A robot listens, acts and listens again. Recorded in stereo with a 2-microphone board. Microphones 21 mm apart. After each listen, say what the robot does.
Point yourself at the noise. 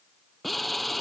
Turn 30° left.
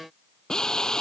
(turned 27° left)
Turn 155° left.
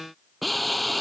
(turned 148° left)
Found it: a drill, straight ahead.